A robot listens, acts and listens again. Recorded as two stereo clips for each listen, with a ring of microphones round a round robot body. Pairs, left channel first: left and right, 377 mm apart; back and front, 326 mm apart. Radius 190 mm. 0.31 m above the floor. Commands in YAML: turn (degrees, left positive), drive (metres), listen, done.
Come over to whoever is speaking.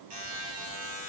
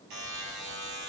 listen: true
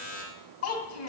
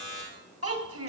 turn: 40
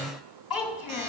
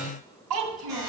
drive: 1.0
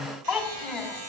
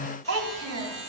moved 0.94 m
drive: 1.0
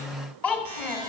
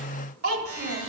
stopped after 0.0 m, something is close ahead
done: "I am next to the child speaking."